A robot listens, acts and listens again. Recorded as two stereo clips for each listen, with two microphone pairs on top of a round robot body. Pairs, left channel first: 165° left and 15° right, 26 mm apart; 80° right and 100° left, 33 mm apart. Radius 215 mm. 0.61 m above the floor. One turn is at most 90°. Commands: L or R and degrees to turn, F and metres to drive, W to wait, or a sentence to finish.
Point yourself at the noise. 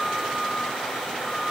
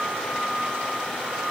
W
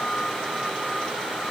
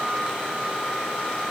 W
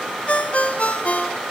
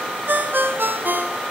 L90
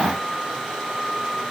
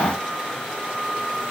L30
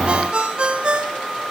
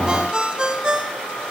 L35
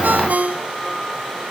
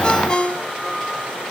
R20
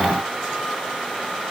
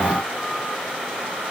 W
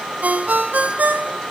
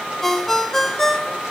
Facing the ringtone, 1 to 2 m away.